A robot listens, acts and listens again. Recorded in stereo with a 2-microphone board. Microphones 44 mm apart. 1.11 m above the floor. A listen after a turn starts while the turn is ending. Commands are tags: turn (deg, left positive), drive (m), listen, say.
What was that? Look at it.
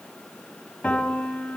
<turn deg="30"/>
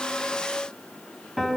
<say>Facing the piano, over 4 m away.</say>